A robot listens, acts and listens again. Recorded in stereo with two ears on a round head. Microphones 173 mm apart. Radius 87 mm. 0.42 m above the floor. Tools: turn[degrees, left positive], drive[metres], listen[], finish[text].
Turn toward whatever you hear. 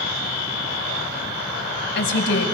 Thought: The woman speaking: about 60° left or 120° left.
Action: turn[60]
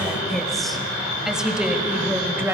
Thought: So it is at 10° right.
Action: turn[-10]
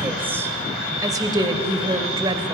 Thought: The woman speaking is now 25° right.
Action: turn[-25]
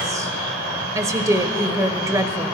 Thought: The woman speaking is now 15° right.
Action: turn[-15]
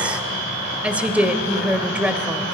Action: finish[Found it: a woman speaking, straight ahead.]